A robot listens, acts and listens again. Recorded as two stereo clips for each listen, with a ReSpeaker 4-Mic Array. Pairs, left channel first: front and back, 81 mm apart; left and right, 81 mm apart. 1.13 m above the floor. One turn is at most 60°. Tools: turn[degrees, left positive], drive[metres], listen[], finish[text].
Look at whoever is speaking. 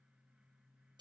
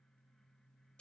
Action: listen[]
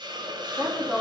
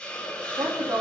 Thought: The woman speaking: 100° right.
Action: turn[-60]
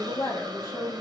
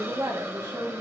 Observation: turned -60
Thought: The woman speaking is now 55° right.
Action: turn[-55]
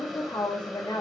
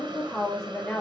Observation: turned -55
Action: finish[Found it: a woman speaking, straight ahead.]